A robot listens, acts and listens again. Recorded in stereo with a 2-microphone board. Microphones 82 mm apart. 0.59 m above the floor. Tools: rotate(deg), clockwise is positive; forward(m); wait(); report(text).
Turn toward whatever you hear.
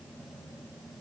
wait()
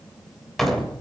rotate(-30)
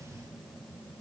wait()
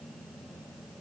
report("I heard a door slam, but can't make it out now. It was about 25° right or 145° left.")